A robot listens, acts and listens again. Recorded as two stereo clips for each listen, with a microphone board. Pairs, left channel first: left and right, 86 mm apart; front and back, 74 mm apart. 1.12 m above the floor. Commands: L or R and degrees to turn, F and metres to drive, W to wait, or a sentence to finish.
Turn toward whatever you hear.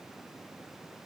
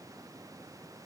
W
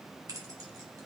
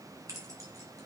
R135
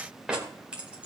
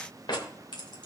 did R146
R10
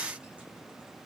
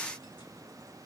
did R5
W
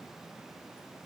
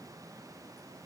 W
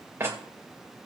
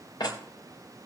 R25
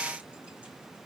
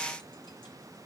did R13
R15
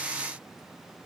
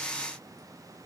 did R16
W
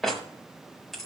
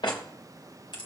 Found it: keys jangling, straight ahead, 2 to 4 m away.